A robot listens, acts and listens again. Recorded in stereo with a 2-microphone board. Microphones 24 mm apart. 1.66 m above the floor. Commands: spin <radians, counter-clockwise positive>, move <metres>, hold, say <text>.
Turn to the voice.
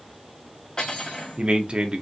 spin -0.70
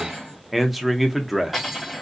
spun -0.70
say Found it: a man speaking, straight ahead, under 1 m away.